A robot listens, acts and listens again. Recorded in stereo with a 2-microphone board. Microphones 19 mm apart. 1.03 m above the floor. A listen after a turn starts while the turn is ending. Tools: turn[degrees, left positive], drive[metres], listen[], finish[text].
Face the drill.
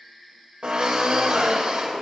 Thought: The drill: about 60° right or 120° right.
Action: turn[-60]
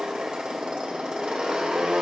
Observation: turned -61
Thought: So it is at 55° right.
Action: turn[-55]
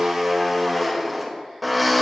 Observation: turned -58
Action: finish[Found it: a drill, straight ahead, 2 to 4 m away.]